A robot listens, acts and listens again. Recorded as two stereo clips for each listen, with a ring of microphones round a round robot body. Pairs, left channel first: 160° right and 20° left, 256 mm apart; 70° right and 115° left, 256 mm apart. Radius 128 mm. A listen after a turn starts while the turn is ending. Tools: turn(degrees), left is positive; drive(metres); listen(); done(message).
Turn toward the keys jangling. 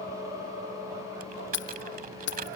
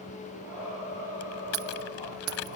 turn(degrees=150)
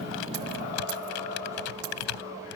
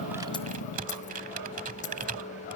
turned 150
done("Found it: keys jangling, straight ahead.")